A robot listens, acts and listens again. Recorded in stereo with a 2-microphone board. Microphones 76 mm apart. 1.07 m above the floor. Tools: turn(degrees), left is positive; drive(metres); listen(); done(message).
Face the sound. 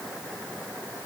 listen()
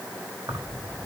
turn(degrees=-55)
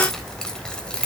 turn(degrees=15)
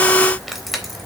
done("Found it: keys jangling, straight ahead.")